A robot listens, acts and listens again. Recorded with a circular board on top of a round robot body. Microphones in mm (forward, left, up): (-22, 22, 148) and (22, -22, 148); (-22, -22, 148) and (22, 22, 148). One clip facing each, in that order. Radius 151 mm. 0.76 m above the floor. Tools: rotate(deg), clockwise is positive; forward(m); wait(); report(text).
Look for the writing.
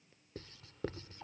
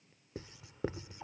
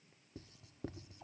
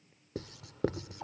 rotate(-30)
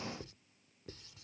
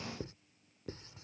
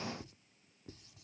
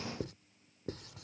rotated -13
rotate(-15)
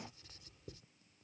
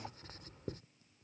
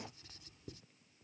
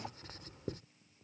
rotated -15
report("Found it: writing, straight ahead.")